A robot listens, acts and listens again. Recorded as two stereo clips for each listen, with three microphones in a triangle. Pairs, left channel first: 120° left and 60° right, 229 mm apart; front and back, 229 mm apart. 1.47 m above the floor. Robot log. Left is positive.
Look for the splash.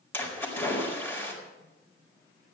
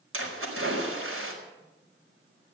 note: The splash: 160° right.
cmd yaw -160
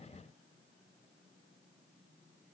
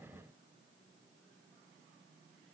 end: I heard a splash from this way, but can't make it out now.